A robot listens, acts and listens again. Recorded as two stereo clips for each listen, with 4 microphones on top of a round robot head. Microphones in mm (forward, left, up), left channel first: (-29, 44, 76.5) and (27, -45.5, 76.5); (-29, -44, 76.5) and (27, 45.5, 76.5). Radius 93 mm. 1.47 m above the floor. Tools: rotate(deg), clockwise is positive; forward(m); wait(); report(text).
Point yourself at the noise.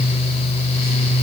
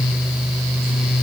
wait()
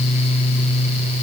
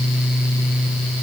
wait()
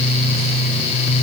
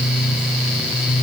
report("I can't make out anything to turn to.")